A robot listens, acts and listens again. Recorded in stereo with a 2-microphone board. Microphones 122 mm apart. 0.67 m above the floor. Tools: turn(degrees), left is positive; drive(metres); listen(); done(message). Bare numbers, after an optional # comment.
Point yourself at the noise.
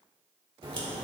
# The crack: about 45° right or 135° right.
turn(-45)
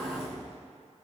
# So it is at 80° right.
turn(-80)
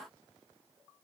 done("Facing where the crack came from. I can't hear it now.")